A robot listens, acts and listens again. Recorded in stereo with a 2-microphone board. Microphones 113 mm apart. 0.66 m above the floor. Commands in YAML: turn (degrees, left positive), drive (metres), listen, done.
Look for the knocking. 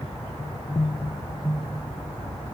listen: true
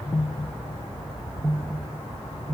listen: true
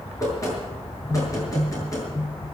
turn: 25
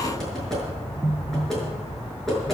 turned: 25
done: "Facing the knocking, over 4 m away."